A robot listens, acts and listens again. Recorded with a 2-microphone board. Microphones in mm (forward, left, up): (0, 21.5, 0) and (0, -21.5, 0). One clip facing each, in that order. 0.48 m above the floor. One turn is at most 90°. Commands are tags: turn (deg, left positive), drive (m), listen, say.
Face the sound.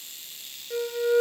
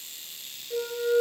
<turn deg="35"/>
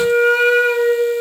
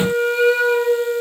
<turn deg="90"/>
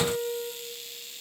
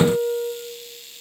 <turn deg="50"/>
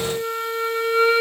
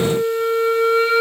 <turn deg="10"/>
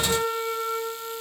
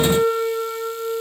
<say>Facing the flute, 1 to 2 m away.</say>